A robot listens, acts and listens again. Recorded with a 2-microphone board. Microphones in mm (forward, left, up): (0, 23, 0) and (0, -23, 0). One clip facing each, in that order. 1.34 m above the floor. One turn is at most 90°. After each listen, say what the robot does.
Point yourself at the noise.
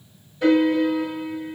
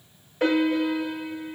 Turn 90° right.
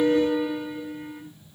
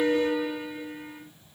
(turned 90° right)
Found it: a piano, straight ahead.